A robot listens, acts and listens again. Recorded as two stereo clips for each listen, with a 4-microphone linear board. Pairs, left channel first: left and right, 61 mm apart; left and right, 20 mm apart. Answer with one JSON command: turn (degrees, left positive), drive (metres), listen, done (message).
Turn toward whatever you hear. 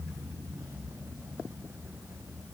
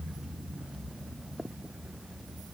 {"listen": true}
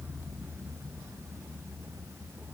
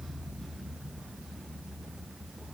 {"listen": true}
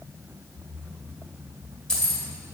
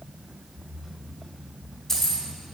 {"turn": 30}
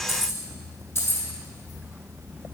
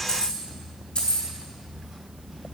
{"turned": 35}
{"turn": 135}
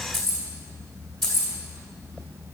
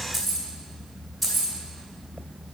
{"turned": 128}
{"done": "Facing the keys jangling, 2 to 4 m away."}